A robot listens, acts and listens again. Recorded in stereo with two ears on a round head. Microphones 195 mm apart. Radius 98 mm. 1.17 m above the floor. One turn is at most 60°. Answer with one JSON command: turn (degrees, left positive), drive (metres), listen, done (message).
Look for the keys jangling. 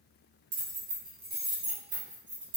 {"turn": -55}
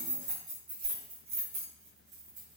{"turn": -40}
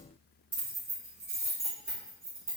{"turn": -15}
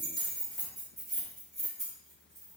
{"done": "Facing the keys jangling, 1 to 2 m away."}